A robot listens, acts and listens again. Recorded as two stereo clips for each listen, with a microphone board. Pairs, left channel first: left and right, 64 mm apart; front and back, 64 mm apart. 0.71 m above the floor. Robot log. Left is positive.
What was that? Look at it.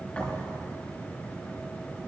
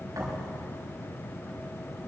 note: The thud: 165° left.
cmd yaw +165
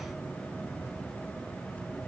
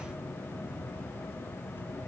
end: I heard a thud from this way, but can't make it out now.